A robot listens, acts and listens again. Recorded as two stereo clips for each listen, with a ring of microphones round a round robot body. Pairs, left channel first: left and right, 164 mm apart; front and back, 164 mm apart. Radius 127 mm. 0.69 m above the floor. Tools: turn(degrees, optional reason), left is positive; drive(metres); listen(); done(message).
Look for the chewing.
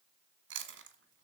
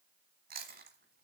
turn(degrees=-125, reason="The chewing: 125° right.")
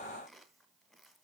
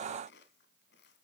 listen()
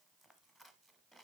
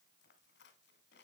listen()
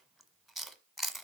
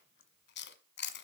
done("Facing the chewing, 1 to 2 m away.")